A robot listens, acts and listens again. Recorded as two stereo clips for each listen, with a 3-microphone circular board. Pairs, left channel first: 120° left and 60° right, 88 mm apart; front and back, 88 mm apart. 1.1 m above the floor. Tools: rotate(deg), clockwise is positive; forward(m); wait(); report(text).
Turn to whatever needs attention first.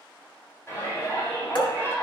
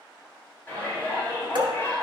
rotate(-60)
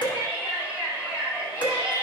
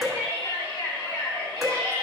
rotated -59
report("Facing the shout.")